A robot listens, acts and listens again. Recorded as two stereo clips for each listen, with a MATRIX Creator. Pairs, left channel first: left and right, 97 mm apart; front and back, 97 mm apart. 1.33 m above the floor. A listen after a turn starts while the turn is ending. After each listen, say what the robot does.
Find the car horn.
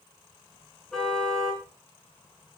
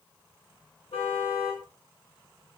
Found it: a car horn, straight ahead, over 4 m away.